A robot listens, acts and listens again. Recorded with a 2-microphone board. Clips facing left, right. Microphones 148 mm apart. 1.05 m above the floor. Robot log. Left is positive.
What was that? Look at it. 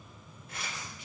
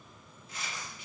note: The tearing paper: about 60° left or 120° left.
cmd yaw +60
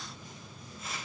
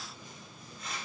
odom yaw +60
end: Facing the tearing paper, 1 to 2 m away.